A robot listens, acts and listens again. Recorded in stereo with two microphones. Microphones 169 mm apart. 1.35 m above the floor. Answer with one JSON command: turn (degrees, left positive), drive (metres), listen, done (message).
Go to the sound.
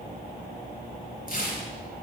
{"turn": 55}
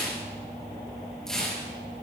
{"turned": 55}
{"drive": 1.0}
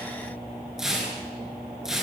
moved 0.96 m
{"drive": 1.0}
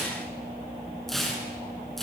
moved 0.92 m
{"drive": 1.0}
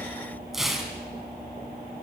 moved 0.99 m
{"drive": 1.0}
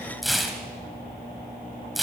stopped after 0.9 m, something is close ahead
{"done": "Arrived at the tearing paper, straight ahead."}